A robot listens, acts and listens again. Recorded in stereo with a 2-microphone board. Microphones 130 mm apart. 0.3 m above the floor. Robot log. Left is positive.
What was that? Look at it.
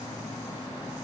cmd idle
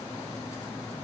cmd idle
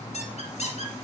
note: The squeak: about 65° left or 115° left.
cmd yaw +65
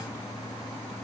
cmd idle
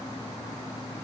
cmd idle
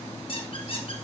note: So it is at 50° left.
cmd yaw +50
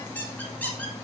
note: The squeak is now 15° left.
cmd yaw +15
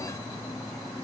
cmd idle
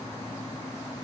cmd idle
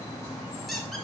end: Facing the squeak, 2 to 4 m away.